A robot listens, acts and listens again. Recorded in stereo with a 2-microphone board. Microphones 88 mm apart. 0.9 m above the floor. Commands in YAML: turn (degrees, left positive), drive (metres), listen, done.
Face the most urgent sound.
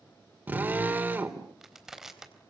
listen: true
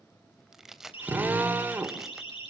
turn: 90
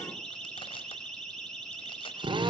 done: "Found it: a siren, straight ahead."